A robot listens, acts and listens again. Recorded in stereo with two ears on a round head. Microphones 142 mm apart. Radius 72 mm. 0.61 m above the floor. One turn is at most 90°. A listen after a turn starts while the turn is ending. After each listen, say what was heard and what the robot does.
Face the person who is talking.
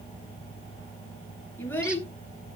Turn 30° left.
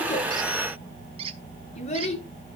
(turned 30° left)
So it is at 135° left. Turn 90° left.
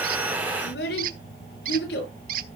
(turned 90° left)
The child speaking is now 70° left. Turn 70° left.
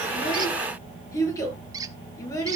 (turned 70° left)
The child speaking is now 20° left. Turn 20° left.
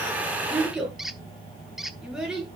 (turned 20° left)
Facing the child speaking.